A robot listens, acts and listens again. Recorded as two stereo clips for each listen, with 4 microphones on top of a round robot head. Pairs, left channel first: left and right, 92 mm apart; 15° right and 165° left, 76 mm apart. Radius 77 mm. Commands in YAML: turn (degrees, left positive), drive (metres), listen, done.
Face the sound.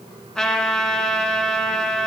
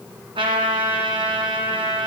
turn: 170
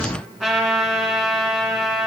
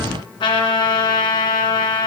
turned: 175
done: "Facing the trumpet."